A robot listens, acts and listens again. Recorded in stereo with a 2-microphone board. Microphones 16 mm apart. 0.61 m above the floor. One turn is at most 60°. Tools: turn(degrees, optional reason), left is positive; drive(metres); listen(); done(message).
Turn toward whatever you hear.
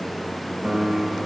turn(degrees=-60)
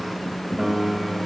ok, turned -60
turn(degrees=-35, reason="So it is at 35° right.")
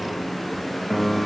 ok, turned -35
done("Found it: a piano, straight ahead.")